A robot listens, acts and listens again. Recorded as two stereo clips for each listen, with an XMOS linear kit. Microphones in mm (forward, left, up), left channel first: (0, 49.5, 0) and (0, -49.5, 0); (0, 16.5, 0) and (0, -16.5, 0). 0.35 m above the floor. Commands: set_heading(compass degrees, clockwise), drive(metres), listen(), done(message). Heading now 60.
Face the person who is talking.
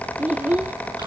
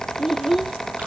set_heading(90)
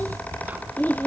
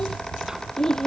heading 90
set_heading(70)
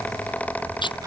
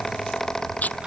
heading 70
listen()
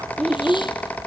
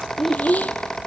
done("Facing the child speaking.")